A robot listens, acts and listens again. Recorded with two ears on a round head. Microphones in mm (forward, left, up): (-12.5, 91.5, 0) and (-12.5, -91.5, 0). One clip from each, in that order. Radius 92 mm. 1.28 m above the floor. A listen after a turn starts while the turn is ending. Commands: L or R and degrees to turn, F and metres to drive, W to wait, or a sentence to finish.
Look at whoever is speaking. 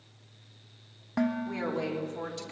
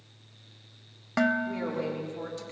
L25
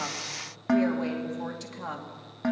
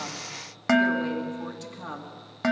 L30
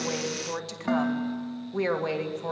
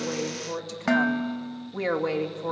L25
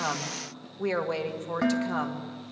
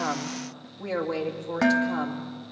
L130
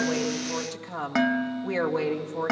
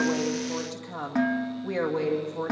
L20
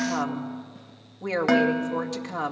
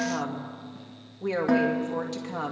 Facing the woman speaking, 2 to 4 m away.